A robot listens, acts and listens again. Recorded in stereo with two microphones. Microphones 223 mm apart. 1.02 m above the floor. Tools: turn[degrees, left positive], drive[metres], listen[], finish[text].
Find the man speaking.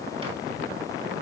Action: listen[]
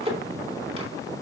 Action: listen[]
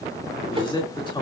Thought: The man speaking: about 20° left or 160° left.
Action: turn[20]
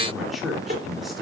Action: finish[Facing the man speaking.]